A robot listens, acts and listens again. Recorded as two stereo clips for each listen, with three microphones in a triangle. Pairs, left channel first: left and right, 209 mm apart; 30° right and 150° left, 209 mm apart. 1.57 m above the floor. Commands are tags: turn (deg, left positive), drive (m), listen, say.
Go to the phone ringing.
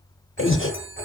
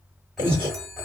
<turn deg="-120"/>
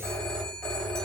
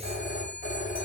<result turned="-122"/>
<drive m="1.0"/>
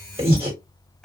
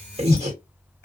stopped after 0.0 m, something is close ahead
<listen/>
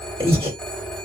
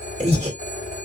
<say>Something is in my way. I am facing the phone ringing but have not reached it.</say>